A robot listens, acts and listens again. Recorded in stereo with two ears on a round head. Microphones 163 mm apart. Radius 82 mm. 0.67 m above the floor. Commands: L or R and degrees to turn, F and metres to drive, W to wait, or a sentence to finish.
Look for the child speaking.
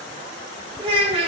R35
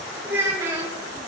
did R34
R20
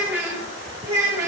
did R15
R20
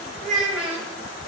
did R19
Found it: a child speaking, straight ahead.